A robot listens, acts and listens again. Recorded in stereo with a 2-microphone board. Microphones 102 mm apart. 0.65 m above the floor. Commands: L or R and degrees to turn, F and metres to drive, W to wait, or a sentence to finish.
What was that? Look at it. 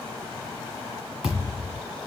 R30
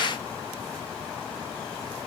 W
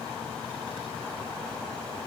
I heard a thud, but can't make it out now. It was about 25° left or 145° right.